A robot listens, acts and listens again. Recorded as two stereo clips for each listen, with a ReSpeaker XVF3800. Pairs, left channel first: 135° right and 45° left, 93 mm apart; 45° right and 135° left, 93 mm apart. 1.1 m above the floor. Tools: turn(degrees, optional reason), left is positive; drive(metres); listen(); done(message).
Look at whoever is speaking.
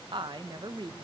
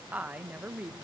turn(degrees=65, reason="The woman speaking: 65° left.")
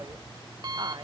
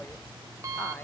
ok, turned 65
listen()
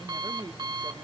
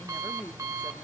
turn(degrees=20, reason="The woman speaking is now 20° left.")
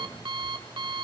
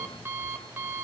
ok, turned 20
listen()
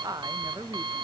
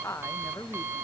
turn(degrees=10, reason="The woman speaking is now 10° left.")
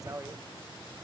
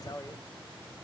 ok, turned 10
done("Facing the woman speaking.")